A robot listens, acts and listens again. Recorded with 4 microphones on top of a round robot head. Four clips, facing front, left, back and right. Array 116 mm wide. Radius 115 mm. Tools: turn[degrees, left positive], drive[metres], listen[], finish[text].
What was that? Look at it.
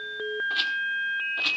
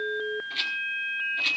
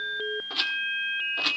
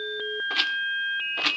Thought: The rattle: 100° right.
Action: turn[-100]
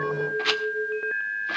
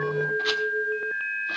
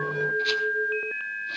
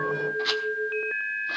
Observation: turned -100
Action: finish[Found it: a rattle, straight ahead.]